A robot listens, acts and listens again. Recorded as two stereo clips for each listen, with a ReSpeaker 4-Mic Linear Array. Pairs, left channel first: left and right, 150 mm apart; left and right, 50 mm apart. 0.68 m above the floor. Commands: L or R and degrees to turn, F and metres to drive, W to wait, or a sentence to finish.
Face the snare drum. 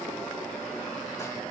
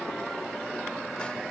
W
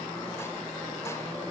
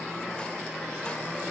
W
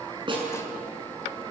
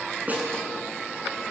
R35
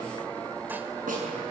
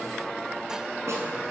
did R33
W
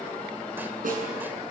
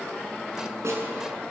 R115
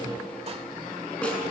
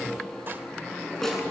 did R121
Facing the snare drum.